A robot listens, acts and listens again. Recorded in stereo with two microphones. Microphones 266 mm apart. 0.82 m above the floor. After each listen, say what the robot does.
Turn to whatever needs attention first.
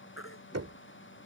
Turn 50° left.
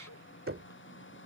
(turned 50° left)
Keep listening.
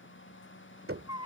Turn 80° left.
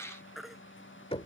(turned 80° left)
Facing the baby crying.